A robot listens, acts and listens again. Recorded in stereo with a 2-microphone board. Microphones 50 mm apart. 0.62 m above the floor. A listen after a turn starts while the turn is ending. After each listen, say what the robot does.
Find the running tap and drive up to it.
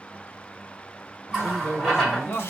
Turn 30° left.
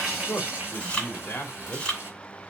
Turn 25° right.
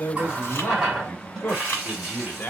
Drive 1.0 m forward.
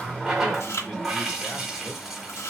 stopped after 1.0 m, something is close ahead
Turn 10° right.
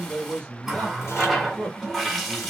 I am next to the running tap.